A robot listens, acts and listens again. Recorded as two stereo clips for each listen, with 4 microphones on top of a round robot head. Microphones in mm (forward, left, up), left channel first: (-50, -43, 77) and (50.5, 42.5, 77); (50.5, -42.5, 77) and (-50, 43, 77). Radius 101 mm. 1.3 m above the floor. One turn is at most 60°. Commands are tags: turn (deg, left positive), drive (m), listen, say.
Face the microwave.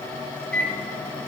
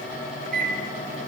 <turn deg="60"/>
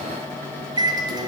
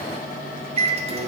<turn deg="60"/>
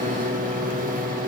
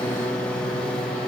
<turn deg="45"/>
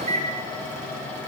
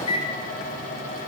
<say>Found it: a microwave, straight ahead, 1 to 2 m away.</say>